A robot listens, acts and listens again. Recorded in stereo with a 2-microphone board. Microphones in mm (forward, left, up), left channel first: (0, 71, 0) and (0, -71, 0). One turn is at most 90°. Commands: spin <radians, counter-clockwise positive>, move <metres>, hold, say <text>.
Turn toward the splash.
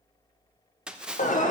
spin -0.52
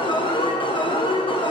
hold
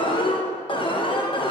say I heard a splash, but can't make it out now. It was about 25° left or 145° right.